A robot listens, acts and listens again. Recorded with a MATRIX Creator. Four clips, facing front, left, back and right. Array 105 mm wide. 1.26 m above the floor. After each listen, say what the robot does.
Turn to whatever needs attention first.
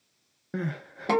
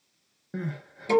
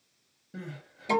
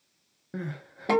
Facing the crying, under 1 m away.